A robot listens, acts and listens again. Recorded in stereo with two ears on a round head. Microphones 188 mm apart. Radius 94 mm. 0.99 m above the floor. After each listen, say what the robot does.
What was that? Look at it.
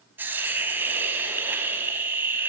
Turn 30° right.
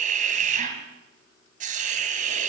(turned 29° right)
Turn 140° right.
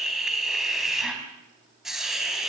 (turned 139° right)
Found it: a hiss, straight ahead, 2 to 4 m away.